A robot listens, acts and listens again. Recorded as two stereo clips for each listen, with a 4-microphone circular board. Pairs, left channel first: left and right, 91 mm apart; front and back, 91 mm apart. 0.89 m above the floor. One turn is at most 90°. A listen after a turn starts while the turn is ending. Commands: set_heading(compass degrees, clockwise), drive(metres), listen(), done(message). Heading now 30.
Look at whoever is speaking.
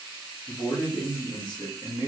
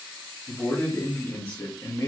set_heading(335)
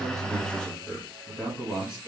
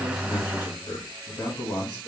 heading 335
done("Found it: a man speaking, straight ahead, 1 to 2 m away.")